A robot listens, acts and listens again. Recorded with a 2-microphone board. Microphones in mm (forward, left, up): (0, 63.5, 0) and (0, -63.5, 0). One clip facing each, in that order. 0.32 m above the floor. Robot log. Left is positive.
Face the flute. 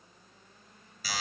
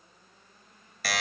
cmd idle
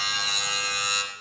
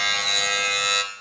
cmd idle
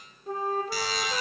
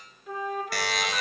note: The flute: about 35° left or 145° left.
cmd yaw +35
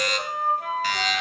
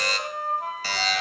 note: So it is at 110° left.
cmd yaw +110
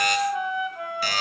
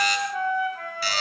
note: The flute is now 20° left.
cmd yaw +20
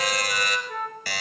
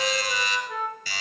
end: Facing the flute.